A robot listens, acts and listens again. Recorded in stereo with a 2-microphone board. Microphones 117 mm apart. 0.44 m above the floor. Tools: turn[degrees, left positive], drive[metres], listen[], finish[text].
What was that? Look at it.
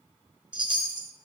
Thought: The chime: about 45° right or 135° right.
Action: turn[-45]
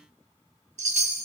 Thought: So it is at 90° right.
Action: turn[-90]
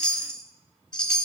Action: finish[Found it: a chime, straight ahead.]